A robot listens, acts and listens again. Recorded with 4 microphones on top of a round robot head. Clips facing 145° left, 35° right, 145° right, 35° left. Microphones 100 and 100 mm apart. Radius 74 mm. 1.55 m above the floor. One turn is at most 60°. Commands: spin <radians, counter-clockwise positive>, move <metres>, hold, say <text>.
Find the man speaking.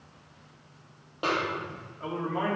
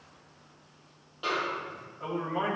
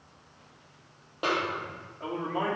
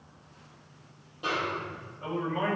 spin -1.05
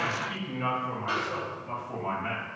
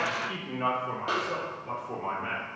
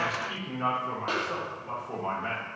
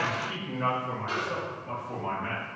spin -1.05
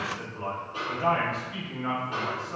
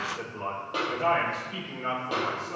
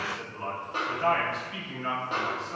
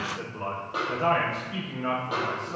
spin -0.44
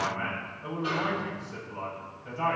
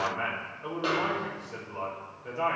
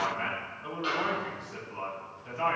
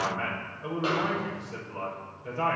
say Facing the man speaking.